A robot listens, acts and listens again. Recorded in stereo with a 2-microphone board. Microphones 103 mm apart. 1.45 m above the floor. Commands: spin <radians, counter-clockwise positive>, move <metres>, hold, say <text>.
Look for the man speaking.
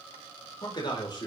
spin 0.79
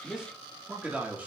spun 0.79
spin -0.26
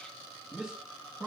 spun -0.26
spin -0.17
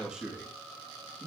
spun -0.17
spin -0.26
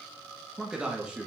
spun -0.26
spin -0.17
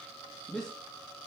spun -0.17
say Found it: a man speaking, straight ahead.